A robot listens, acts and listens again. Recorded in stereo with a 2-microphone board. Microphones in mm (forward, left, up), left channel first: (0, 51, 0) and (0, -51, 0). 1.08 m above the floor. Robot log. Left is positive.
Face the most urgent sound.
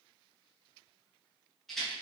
cmd idle
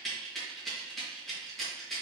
cmd idle
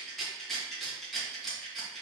end: I can't make out anything urgent, only a rattle.